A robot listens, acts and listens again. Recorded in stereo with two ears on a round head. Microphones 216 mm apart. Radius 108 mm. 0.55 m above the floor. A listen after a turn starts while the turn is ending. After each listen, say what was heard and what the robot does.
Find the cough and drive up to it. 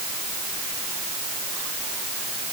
Keep listening.
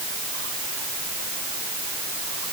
Keep listening.
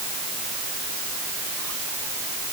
I can't make out a cough to turn to.